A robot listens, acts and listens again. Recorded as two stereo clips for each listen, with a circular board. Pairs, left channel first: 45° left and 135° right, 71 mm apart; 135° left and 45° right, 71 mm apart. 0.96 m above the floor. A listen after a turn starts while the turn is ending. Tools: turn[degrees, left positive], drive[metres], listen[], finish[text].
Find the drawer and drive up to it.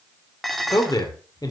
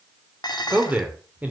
Action: listen[]
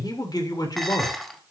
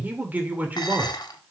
Action: listen[]
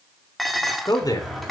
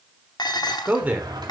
Thought: The drawer: 45° right.
Action: turn[-45]
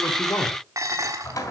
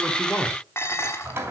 Thought: The drawer is now 10° left.
Action: turn[10]
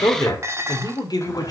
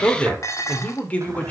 Action: listen[]
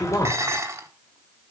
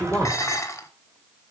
Action: listen[]
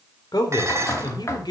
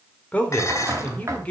Action: drive[1.0]
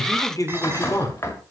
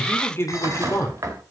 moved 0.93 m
Action: drive[1.0]
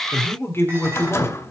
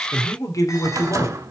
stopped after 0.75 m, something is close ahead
Action: finish[I am next to the drawer.]